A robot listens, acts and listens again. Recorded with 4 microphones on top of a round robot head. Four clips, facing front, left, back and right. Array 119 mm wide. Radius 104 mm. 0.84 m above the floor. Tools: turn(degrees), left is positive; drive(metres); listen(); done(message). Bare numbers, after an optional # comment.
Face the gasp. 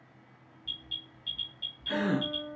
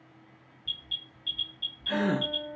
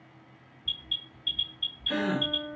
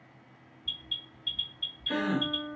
# The gasp: 65° left.
turn(65)
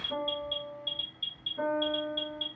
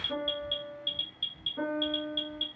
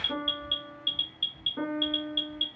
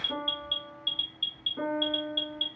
done("I heard a gasp from this way, but can't make it out now.")